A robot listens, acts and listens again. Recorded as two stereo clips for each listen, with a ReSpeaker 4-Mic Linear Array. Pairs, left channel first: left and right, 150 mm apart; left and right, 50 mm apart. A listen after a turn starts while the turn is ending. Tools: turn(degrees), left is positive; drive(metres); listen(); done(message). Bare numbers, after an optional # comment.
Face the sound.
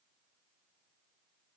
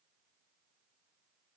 listen()
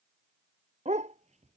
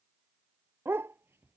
# The dog barking: about 50° right or 130° right.
turn(-50)
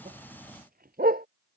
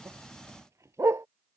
# So it is at 80° right.
turn(-80)
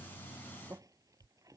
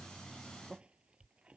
listen()
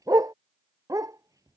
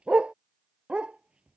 # The dog barking is now 25° right.
turn(-25)
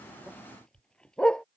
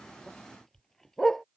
done("Facing the dog barking.")